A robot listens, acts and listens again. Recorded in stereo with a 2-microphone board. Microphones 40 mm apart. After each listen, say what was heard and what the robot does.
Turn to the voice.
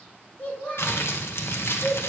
The child speaking: about 50° left or 130° left. Turn 50° left.
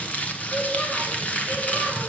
Keep listening.
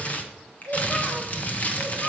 So it is at 45° left. Turn 45° left.
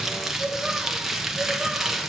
The child speaking is now 20° right. Turn 20° right.
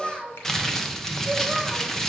Facing the child speaking, 2 to 4 m away.